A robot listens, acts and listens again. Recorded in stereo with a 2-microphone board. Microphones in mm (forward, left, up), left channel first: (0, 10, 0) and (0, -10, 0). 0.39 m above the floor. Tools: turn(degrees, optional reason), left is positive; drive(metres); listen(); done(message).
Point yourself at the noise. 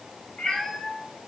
turn(degrees=60, reason="The cat meowing: about 60° left or 120° left.")
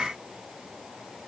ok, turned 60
listen()
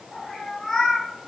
turn(degrees=35, reason="So it is at 35° left.")
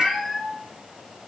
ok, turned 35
turn(degrees=15, reason="The cat meowing is now 15° left.")
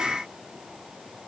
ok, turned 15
listen()
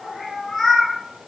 turn(degrees=20, reason="The cat meowing is now 20° left.")
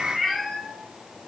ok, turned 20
done("Found it: a cat meowing, straight ahead, 1 to 2 m away.")